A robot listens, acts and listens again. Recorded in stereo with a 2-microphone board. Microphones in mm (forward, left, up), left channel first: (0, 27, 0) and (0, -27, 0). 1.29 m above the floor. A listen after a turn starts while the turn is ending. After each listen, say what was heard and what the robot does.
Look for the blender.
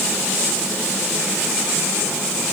Keep listening.
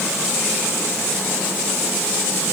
Keep listening.
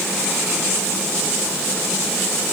I can't make out a blender.